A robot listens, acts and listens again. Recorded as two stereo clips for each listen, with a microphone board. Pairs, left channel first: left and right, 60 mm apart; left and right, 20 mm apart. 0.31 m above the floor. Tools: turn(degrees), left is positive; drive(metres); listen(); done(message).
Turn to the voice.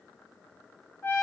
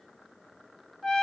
listen()
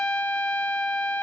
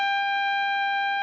listen()
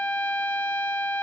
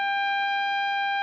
done("I can't make out anyone speaking to turn to.")